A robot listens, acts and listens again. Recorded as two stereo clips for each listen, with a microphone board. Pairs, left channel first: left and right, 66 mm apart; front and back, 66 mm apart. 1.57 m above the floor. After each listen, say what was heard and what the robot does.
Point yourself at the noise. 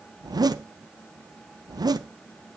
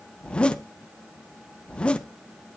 The zipper: 75° right. Turn 75° right.
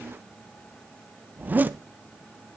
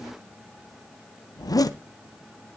The zipper is now 25° right. Turn 25° right.
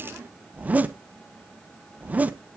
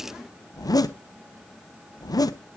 The zipper is now 20° right. Turn 20° right.
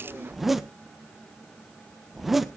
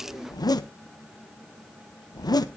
Found it: a zipper, straight ahead, under 1 m away.